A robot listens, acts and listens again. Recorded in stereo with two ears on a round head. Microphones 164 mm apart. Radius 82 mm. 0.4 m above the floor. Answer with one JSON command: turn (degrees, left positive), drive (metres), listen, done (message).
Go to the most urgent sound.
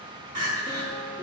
{"turn": -50}
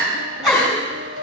{"drive": 1.0}
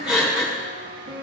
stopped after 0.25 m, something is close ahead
{"done": "Something is in my way. I am facing the crying but have not reached it."}